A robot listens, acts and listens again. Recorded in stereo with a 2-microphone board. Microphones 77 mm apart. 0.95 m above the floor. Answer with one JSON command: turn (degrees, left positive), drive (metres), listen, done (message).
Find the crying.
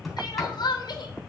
{"turn": 65}
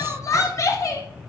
{"turn": 45}
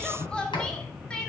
{"turn": 15}
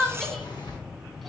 {"done": "Found it: crying, straight ahead, 1 to 2 m away."}